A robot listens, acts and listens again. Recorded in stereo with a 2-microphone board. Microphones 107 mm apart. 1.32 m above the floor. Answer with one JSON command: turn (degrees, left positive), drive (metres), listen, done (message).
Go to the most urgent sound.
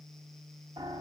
{"listen": true}
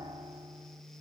{"listen": true}
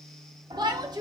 {"turn": -40}
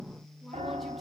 {"listen": true}
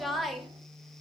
{"drive": 1.0}
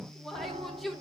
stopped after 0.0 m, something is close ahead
{"done": "Something is in my way. I am facing the shout but have not reached it."}